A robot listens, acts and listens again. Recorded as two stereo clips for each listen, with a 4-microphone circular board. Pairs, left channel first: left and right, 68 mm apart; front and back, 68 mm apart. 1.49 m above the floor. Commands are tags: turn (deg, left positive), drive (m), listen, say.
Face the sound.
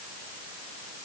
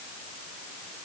<listen/>
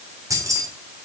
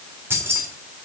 <turn deg="-125"/>
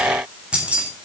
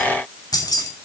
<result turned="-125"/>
<turn deg="-20"/>
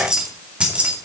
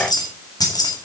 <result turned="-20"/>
<turn deg="-20"/>
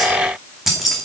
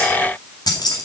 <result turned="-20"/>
<say>Facing the keys jangling.</say>